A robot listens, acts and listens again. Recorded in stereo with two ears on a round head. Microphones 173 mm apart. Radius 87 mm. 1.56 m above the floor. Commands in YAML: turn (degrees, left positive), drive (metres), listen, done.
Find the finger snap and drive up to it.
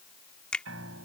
turn: 30
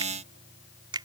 turn: -25
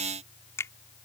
turn: 15
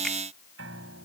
listen: true
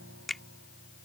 drive: 1.0
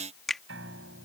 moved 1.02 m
drive: 1.0
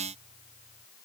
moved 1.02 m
listen: true
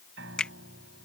drive: 1.0
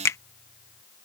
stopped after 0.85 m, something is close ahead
turn: 15
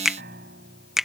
done: "Arrived at the finger snap, straight ahead."